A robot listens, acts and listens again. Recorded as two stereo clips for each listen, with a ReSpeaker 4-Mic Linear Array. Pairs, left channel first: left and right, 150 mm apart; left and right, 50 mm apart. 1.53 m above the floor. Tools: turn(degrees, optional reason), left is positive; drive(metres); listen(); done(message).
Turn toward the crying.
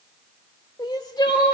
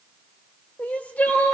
turn(degrees=30, reason="The crying: about 30° left or 150° left.")
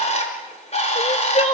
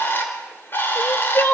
turn(degrees=115, reason="So it is at 115° left.")
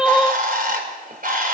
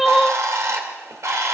done("Facing the crying.")